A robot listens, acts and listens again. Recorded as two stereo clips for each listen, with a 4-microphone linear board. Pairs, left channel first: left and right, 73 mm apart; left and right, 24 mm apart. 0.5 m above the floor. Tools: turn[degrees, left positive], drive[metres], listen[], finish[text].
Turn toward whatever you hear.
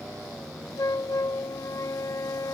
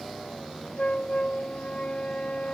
Thought: The flute: about 55° left or 125° left.
Action: turn[55]
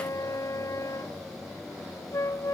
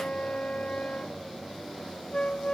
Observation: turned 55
Thought: So it is at 65° left.
Action: turn[65]
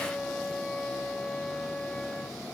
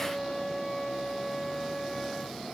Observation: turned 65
Thought: The flute is now 15° left.
Action: turn[15]
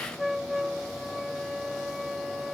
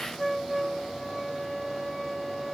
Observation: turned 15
Action: finish[Facing the flute.]